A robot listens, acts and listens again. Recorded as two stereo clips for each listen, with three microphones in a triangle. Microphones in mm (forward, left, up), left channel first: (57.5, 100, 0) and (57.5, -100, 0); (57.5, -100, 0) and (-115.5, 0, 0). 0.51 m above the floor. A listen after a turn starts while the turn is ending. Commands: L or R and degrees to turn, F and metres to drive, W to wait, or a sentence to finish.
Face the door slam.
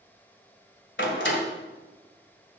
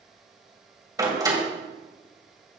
L80
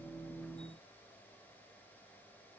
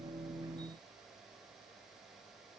Facing where the door slam came from. I can't hear it now.